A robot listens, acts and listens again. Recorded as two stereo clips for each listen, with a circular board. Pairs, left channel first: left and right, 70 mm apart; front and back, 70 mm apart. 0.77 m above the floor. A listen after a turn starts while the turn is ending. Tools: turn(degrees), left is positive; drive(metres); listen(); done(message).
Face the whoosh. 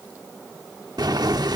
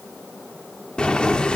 listen()
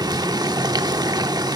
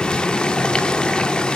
listen()
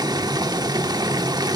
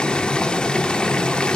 done("I can't make out a whoosh, only boiling.")